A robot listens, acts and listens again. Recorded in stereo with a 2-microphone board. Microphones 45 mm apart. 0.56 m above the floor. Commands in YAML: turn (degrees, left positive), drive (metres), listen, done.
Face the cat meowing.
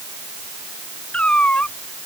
turn: 25
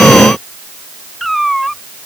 done: "Found it: a cat meowing, straight ahead."